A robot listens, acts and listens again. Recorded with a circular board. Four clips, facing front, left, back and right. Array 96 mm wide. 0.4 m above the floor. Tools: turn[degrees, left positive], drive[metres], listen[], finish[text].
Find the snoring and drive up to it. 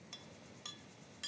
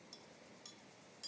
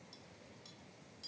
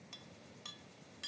Action: listen[]
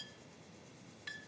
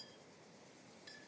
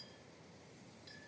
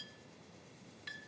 Action: listen[]
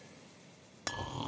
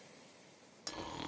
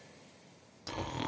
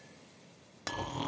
Thought: The snoring: 175° right.
Action: turn[-175]
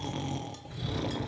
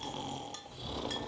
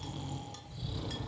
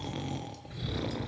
Thought: The snoring is now 45° right.
Action: turn[-45]
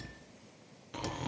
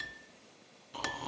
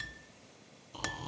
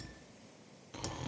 Action: drive[1.0]
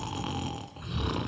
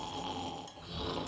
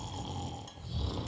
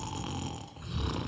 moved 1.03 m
Thought: The snoring is now 10° right.
Action: turn[-10]
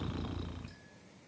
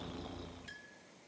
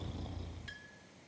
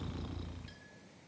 Action: drive[1.0]
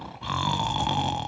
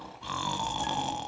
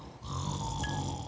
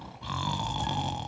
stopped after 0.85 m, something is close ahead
Action: finish[Arrived at the snoring, straight ahead.]